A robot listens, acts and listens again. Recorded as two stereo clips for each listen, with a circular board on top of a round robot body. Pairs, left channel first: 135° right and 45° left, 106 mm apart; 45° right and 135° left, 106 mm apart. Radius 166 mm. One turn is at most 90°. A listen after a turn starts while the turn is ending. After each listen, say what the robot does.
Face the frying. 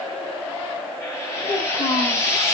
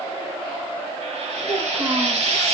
Turn 90° left.
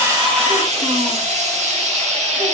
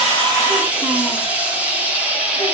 Turn 60° left.
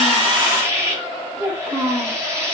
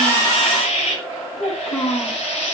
Turn 20° right.
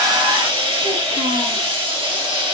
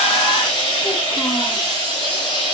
Found it: frying, straight ahead.